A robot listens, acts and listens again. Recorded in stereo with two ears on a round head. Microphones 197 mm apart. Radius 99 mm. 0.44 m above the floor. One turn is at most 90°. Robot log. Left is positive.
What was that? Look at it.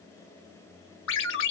note: The ringtone: about 60° left or 120° left.
cmd yaw +60
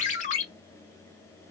note: So it is at 40° left.
cmd yaw +40
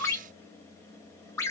note: The ringtone is now 15° left.
cmd yaw +15
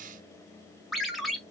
end: Found it: a ringtone, straight ahead, 1 to 2 m away.